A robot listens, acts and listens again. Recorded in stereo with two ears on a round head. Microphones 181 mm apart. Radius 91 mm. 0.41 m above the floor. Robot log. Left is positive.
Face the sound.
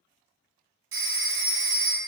cmd yaw -90
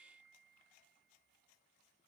cmd idle
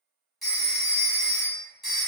end: Found it: a phone ringing, straight ahead, 1 to 2 m away.